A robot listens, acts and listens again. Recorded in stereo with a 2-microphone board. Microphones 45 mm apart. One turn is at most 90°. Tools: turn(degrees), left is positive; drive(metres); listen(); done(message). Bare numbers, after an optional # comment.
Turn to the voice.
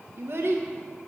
# The child speaking: about 65° right or 115° right.
turn(-65)
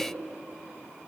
listen()
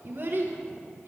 # So it is at 50° right.
turn(-50)
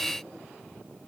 listen()
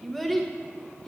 done("Found it: a child speaking, straight ahead.")